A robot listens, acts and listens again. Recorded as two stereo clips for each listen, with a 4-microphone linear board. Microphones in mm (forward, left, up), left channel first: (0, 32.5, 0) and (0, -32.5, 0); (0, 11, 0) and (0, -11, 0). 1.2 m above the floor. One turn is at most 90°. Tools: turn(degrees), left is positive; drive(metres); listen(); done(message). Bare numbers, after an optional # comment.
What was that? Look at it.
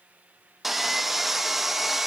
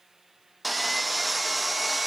turn(-30)
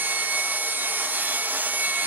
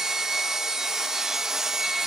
# So it is at 150° right.
turn(-90)
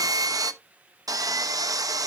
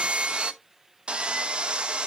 # The sawing is now 85° right.
turn(-85)
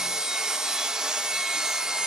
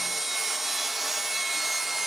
# The sawing is now 10° right.
turn(-10)
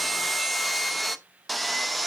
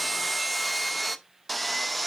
done("Facing the sawing, under 1 m away.")